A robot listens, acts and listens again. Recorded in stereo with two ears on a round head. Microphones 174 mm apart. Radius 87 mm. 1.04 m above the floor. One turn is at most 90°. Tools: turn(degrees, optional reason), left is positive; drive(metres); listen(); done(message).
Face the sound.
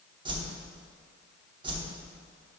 turn(degrees=-25, reason="The whoosh: about 25° right or 155° right.")
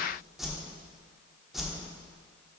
done("Found it: a whoosh, straight ahead, 1 to 2 m away.")